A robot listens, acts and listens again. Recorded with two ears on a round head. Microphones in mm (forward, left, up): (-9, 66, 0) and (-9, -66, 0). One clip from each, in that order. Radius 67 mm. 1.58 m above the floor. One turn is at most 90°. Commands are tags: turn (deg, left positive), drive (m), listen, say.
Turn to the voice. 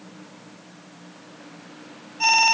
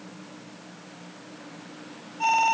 <listen/>
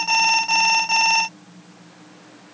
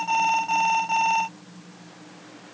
<listen/>
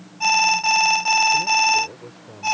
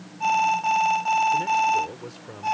<turn deg="-90"/>
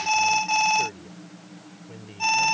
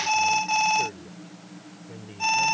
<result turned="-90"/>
<turn deg="15"/>
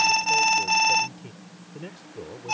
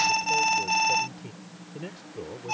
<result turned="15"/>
<say>Facing the man speaking.</say>